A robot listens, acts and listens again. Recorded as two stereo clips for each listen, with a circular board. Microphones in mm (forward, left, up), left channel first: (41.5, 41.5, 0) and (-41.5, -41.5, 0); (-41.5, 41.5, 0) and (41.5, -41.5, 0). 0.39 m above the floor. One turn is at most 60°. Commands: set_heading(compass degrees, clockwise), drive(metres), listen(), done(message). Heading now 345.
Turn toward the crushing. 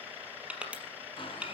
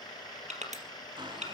set_heading(40)
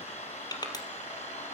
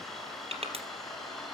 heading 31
set_heading(41)
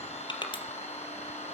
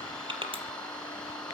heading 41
done("Found it: crushing, straight ahead.")